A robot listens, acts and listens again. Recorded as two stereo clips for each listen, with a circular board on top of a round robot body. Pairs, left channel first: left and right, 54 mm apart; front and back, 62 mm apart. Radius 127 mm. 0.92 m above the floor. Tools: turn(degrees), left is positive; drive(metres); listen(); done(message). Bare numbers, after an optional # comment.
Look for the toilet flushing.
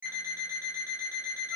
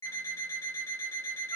listen()
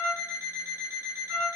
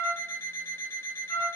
listen()
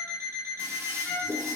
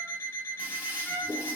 # The toilet flushing: 115° right.
turn(-115)
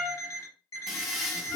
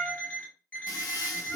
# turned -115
done("Facing the toilet flushing.")